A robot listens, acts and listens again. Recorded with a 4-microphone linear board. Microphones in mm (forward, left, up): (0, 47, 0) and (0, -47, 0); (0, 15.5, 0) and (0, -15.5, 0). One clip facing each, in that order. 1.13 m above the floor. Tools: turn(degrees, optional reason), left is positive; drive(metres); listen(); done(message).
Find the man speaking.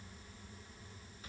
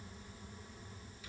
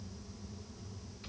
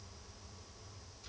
listen()
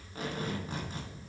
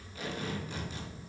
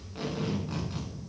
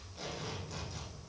listen()
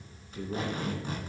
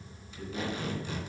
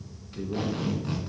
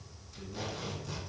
turn(degrees=70, reason="The man speaking: about 70° left or 110° left.")
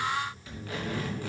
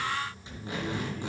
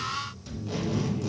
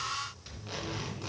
turn(degrees=30, reason="So it is at 30° left.")
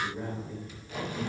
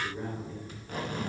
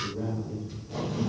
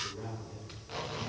done("Facing the man speaking.")